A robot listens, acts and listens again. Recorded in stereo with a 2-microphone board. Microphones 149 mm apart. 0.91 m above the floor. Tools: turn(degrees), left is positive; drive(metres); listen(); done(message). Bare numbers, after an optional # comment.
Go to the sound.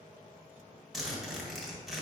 turn(30)
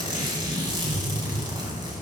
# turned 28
# So it is at 30° right.
turn(-30)
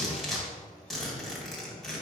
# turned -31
drive(1.0)
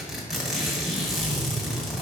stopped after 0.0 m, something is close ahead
done("Something is in my way. I am facing the zipper but have not reached it.")